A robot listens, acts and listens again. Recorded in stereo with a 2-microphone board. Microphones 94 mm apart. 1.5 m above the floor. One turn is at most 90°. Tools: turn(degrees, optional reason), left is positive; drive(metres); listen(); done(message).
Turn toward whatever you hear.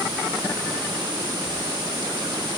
listen()
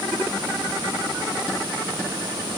listen()
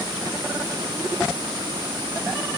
done("I can't make out anything to turn to.")